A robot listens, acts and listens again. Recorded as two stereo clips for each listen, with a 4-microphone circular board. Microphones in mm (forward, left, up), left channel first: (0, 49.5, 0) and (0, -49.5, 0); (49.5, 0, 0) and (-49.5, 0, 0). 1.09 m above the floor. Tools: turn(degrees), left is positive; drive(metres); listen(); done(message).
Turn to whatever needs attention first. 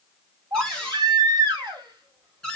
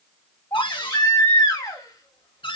turn(degrees=-50)
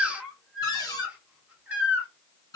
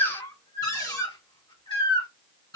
turn(degrees=-15)
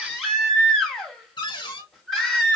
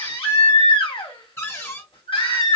done("Found it: a baby crying, straight ahead.")